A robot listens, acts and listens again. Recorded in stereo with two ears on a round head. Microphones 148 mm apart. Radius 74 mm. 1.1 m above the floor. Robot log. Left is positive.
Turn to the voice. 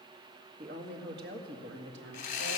cmd yaw -90
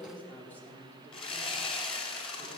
note: So it is at 15° left.
cmd yaw +15
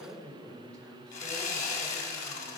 end: Facing the woman speaking, over 4 m away.